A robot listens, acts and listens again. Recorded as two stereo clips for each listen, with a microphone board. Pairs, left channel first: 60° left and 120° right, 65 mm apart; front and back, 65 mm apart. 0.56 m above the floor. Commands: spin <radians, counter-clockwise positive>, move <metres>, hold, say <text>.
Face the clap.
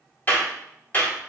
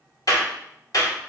say Found it: a clap, straight ahead, 1 to 2 m away.